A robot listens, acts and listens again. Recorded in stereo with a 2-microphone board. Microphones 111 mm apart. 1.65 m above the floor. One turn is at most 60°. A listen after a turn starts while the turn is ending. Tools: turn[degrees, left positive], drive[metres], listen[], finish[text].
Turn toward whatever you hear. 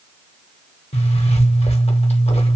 Thought: The zipper: about 70° left or 110° left.
Action: turn[60]
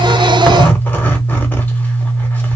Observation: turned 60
Thought: So it is at 15° left.
Action: turn[15]
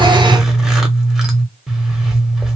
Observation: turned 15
Action: finish[Found it: a zipper, straight ahead.]